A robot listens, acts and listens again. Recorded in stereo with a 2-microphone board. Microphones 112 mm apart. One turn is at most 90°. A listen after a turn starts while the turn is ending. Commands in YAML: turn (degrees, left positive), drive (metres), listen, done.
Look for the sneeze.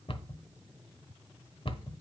listen: true
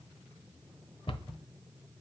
listen: true
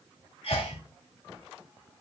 turn: 55
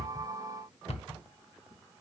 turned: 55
listen: true
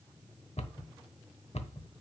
done: "I heard a sneeze, but can't make it out now. It was about straight ahead or 70° left."